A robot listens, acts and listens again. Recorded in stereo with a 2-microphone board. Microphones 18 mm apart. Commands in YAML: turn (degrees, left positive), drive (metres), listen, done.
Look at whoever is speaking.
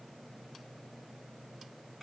listen: true
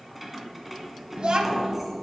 turn: -55
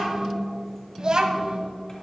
turn: -55
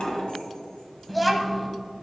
done: "Found it: a child speaking, straight ahead, 1 to 2 m away."